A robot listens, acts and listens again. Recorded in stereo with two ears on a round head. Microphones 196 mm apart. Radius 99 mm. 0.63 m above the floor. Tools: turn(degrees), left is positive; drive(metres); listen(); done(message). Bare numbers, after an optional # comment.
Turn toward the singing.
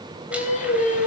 # The singing: about 35° left or 145° left.
turn(35)
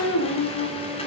# So it is at 110° left.
turn(110)
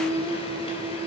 # The singing is now 20° right.
turn(-20)
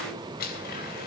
listen()
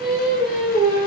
done("Facing the singing.")